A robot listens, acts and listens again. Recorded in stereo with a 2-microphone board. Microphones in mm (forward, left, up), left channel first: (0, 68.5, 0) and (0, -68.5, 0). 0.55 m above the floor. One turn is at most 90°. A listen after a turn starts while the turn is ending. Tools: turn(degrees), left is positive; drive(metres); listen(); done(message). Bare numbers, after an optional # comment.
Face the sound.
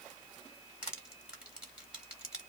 turn(-30)
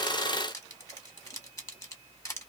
# So it is at 25° left.
turn(25)
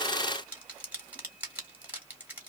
# The crushing is now 15° right.
turn(-15)
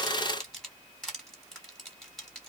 done("Found it: crushing, straight ahead, 1 to 2 m away.")